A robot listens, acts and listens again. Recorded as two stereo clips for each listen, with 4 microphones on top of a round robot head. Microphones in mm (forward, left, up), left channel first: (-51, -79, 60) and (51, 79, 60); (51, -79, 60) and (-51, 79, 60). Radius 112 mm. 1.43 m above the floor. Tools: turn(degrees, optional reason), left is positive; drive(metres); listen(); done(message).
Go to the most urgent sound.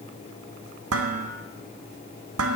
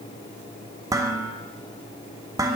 listen()
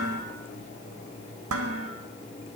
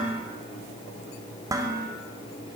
listen()
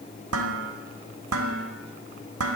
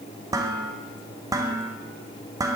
done("I can't make out anything urgent to turn to.")